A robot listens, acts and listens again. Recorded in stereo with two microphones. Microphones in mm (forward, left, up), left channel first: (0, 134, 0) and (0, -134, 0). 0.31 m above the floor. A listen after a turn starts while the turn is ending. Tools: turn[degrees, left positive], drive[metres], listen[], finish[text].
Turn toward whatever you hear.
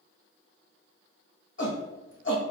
Thought: The shout: about 45° left or 135° left.
Action: turn[45]
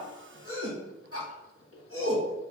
Thought: So it is at 75° left.
Action: turn[75]
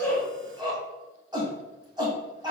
Thought: The shout is now 20° right.
Action: turn[-20]
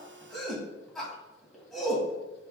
Action: finish[Found it: a shout, straight ahead.]